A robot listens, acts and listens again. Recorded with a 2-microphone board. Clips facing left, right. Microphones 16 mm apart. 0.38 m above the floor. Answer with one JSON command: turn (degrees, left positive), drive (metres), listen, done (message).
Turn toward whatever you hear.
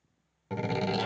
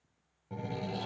{"turn": 55}
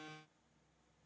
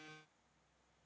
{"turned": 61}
{"listen": true}
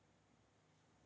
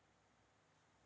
{"done": "I heard a door slam, but can't make it out now. It was about 5° right or 65° left."}